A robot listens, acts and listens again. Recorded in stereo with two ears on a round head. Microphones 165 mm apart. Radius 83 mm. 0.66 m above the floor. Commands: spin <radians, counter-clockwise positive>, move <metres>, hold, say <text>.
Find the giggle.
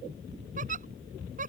spin -0.79
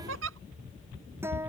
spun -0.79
spin -1.57
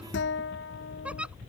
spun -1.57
say Facing the giggle.